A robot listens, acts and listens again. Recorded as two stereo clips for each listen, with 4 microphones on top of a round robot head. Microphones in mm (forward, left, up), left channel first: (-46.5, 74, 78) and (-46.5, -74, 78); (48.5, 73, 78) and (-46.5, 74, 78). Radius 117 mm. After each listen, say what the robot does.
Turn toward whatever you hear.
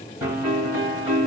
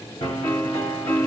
Turn 20° right.
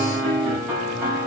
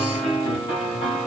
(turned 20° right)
Facing the piano.